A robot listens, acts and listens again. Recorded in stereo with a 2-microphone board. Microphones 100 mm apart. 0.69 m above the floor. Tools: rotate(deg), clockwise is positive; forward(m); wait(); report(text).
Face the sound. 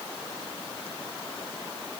wait()
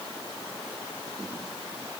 wait()
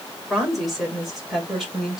rotate(30)
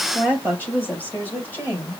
rotate(-15)
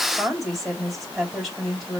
report("Facing the woman speaking.")